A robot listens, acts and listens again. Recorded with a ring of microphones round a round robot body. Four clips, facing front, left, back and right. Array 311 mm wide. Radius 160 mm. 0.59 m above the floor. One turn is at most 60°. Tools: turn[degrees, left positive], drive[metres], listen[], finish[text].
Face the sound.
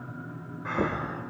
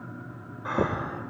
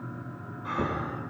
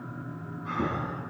Thought: The breathing: 75° left.
Action: turn[60]
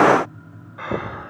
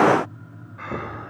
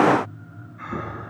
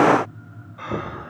Thought: The breathing is now 10° right.
Action: turn[-10]
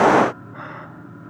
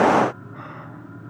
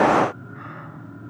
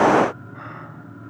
Action: listen[]
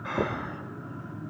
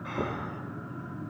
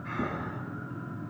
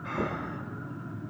Action: finish[Found it: breathing, straight ahead.]